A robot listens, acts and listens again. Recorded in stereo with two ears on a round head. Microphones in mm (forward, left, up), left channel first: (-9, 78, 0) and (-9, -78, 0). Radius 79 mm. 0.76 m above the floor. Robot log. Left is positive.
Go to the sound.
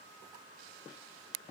cmd idle
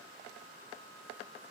cmd idle
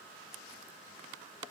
end: I can't make out anything to turn to.